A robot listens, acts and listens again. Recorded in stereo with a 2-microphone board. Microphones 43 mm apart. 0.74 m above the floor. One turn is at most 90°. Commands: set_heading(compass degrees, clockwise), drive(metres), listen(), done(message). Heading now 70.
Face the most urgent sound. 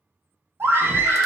set_heading(130)
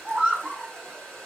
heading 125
set_heading(155)
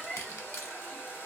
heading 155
done("Found it: a scream, straight ahead.")